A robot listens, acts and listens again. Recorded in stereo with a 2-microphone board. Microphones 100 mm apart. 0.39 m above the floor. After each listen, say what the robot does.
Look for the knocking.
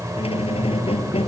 Keep listening.
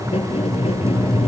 Keep listening.
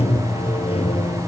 I can't make out knocking to turn to.